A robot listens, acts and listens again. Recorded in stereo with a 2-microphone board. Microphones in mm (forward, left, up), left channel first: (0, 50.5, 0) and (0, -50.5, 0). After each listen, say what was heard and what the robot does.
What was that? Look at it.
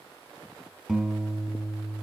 Turn 30° left.
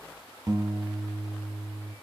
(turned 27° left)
So it is at 30° right. Turn 30° right.
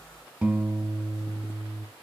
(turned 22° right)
The guitar is now 10° right. Turn 10° right.
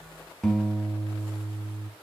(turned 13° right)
Facing the guitar, 2 to 4 m away.